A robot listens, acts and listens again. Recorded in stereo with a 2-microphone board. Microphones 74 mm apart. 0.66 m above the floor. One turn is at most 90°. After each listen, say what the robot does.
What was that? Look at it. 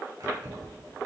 Turn 60° right.
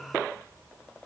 Keep listening.
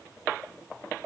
Keep listening.
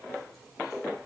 I heard keys jangling, but can't make it out now. It was about straight ahead or 60° right.